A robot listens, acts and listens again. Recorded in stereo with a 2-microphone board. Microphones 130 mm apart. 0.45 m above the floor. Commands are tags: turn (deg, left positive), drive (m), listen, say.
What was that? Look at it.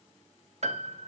<turn deg="-60"/>
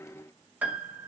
<turn deg="-15"/>
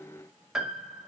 <say>Facing the piano, 1 to 2 m away.</say>